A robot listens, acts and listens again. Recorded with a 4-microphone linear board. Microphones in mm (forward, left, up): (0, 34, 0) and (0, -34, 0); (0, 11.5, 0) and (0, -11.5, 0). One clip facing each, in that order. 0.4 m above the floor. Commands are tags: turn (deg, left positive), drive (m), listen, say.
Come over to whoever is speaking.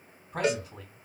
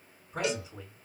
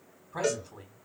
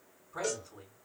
<turn deg="55"/>
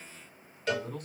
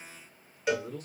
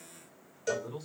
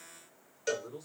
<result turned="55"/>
<turn deg="70"/>
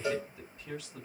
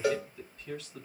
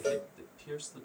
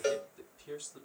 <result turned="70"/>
<turn deg="20"/>
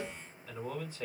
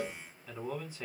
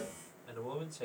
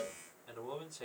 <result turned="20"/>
<drive m="1.0"/>
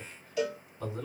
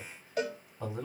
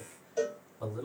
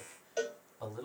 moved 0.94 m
<turn deg="-15"/>
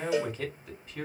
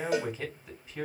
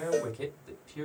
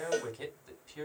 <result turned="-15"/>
<drive m="1.0"/>
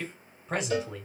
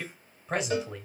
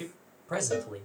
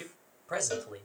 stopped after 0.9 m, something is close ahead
<say>I am next to the man speaking.</say>